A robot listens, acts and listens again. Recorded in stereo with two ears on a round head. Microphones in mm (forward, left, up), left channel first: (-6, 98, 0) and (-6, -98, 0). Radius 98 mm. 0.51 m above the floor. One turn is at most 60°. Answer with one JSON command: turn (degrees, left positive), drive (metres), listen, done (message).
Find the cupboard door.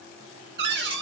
{"turn": -50}
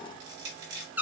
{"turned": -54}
{"turn": -10}
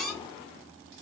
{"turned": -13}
{"done": "Facing the cupboard door, under 1 m away."}